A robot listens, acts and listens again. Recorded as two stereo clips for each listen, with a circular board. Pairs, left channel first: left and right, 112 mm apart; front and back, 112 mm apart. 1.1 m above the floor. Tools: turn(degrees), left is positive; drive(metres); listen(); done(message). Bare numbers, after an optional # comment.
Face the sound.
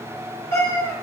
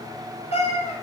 # The cat meowing: 30° left.
turn(30)
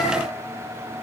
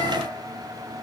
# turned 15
# Nothing new. It was at 15° left.
turn(15)
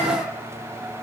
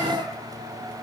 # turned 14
listen()
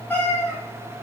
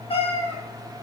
# The cat meowing is now 20° left.
turn(20)
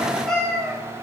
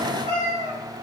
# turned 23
# The cat meowing is now 10° left.
turn(10)
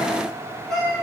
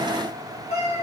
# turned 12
done("Found it: a cat meowing, straight ahead, 2 to 4 m away.")